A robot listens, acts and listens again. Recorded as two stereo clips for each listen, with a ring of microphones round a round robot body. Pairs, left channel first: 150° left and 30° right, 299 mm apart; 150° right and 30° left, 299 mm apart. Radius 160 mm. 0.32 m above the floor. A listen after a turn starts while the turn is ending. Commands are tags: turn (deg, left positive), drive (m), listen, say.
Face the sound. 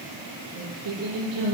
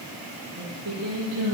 <turn deg="-10"/>
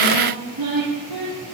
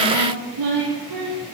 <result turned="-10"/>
<say>Found it: singing, straight ahead.</say>